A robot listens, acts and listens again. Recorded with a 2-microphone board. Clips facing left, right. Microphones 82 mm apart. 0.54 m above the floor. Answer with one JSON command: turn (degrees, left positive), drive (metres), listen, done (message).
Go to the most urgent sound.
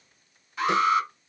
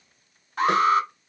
{"turn": -50}
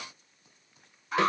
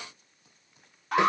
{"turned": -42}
{"turn": -85}
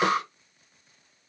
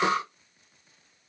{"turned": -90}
{"drive": 1.0}
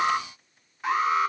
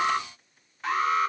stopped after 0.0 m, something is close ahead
{"turn": 10}
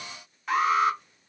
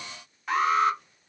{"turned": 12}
{"done": "Blocked. The alarm is further on, straight ahead."}